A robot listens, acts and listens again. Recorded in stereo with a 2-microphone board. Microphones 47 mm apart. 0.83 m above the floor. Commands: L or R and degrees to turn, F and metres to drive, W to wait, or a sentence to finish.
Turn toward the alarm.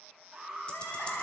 R30
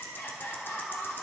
W
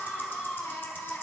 W
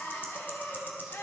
I heard an alarm, but can't make it out now. It was about 20° left or 140° right.